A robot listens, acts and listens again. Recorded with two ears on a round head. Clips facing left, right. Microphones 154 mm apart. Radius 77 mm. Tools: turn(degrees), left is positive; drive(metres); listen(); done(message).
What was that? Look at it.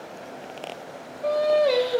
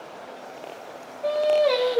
turn(degrees=30)
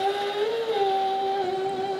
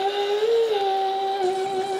turn(degrees=-35)
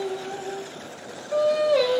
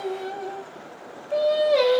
turn(degrees=-15)
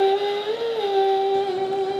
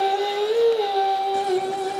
done("Found it: singing, straight ahead.")